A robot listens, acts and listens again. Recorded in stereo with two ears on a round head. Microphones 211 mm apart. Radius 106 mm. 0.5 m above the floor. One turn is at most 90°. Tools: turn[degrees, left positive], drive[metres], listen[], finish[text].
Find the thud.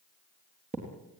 Thought: The thud: about 30° right or 150° right.
Action: turn[-30]
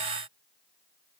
Action: listen[]
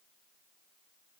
Action: finish[I heard a thud, but can't make it out now. It was about straight ahead or 120° right.]